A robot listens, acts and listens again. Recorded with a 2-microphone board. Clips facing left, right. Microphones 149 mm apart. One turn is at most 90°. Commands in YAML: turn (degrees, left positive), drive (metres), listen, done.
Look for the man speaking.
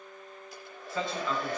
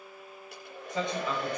turn: -20
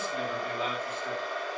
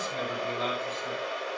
listen: true
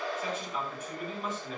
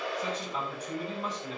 turn: -35
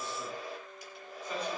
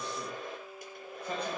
listen: true
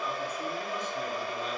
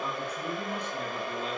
listen: true
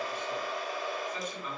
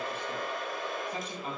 turn: -90
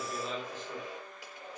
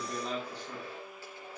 turn: -35
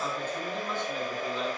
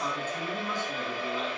listen: true
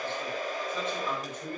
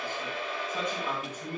turn: -10
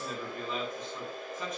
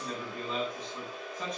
done: "Found it: a man speaking, straight ahead, over 4 m away."